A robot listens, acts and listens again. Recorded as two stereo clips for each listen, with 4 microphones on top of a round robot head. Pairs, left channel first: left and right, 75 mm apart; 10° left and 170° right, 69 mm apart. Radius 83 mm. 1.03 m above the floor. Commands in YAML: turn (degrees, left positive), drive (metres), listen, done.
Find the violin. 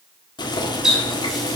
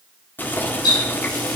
listen: true
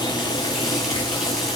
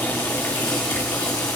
listen: true
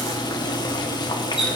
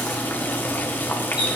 done: "I can't make out a violin to turn to."